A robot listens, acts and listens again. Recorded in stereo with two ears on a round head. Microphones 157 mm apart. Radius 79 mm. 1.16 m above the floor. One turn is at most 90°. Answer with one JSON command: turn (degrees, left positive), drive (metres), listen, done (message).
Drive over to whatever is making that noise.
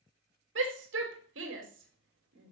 {"turn": -90}
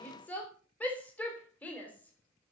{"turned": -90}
{"turn": 10}
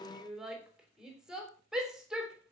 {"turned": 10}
{"drive": 1.0}
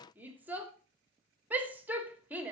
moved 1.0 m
{"turn": -10}
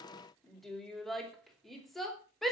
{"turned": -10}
{"drive": 1.0}
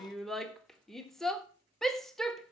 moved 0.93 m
{"drive": 1.0}
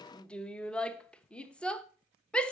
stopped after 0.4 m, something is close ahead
{"done": "I am next to the shout."}